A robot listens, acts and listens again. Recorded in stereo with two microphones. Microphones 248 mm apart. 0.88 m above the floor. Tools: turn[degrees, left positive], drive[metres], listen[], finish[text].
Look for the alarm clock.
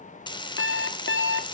Thought: The alarm clock: about 55° left or 125° left.
Action: turn[55]
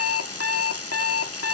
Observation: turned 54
Thought: So it is at 70° left.
Action: turn[70]
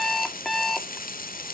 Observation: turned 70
Action: finish[Found it: an alarm clock, straight ahead, 1 to 2 m away.]